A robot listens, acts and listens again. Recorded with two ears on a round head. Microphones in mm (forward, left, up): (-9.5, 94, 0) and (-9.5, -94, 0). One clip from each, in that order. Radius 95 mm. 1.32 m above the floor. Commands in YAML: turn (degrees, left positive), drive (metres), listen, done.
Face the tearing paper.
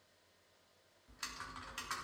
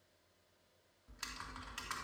listen: true
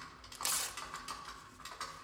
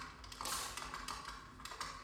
turn: 40
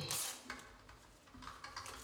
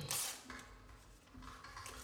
done: "Facing the tearing paper, 1 to 2 m away."